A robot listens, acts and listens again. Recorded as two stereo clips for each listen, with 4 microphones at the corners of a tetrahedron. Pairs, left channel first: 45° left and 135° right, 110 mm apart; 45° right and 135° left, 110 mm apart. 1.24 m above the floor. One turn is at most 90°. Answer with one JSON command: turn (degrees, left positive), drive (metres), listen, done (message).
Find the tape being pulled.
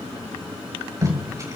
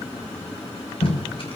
{"turn": -75}
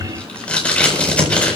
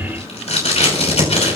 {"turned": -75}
{"turn": -35}
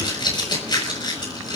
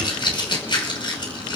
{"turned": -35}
{"done": "Facing the tape being pulled."}